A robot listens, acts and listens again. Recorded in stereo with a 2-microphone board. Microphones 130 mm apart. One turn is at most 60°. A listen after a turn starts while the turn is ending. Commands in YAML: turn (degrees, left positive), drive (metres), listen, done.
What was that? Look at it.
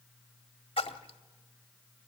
turn: 45
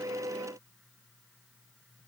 listen: true
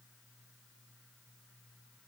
done: "I heard a splash, but can't make it out now. It was about straight ahead or 90° left."